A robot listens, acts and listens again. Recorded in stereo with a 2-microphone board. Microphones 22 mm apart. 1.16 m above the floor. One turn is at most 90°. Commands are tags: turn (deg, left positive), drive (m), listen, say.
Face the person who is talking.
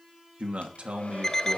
<turn deg="-90"/>
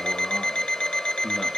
<listen/>
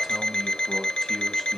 <say>Found it: a man speaking, straight ahead, 2 to 4 m away.</say>